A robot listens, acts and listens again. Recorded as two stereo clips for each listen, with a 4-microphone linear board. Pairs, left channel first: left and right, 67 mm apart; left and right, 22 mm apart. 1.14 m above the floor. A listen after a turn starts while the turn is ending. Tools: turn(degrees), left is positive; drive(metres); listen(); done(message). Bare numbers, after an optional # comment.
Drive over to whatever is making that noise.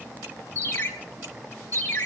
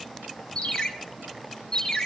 # The ringtone: about 30° left or 150° left.
turn(30)
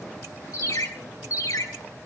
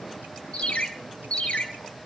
# So it is at 120° left.
turn(120)
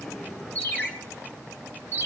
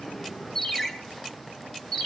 # The ringtone is now 30° left.
turn(30)
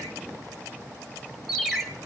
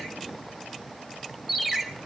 drive(1.0)
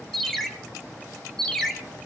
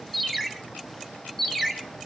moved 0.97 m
drive(1.0)
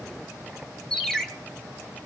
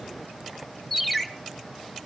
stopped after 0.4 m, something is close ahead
# The ringtone is now 10° left.
turn(10)
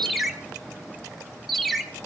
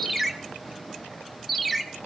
done("I am next to the ringtone.")